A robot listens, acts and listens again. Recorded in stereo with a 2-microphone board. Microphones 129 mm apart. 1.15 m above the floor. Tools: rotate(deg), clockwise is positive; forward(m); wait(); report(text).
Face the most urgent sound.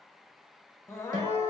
rotate(-20)
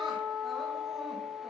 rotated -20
wait()
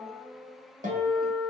report("Found it: crying, straight ahead, under 1 m away.")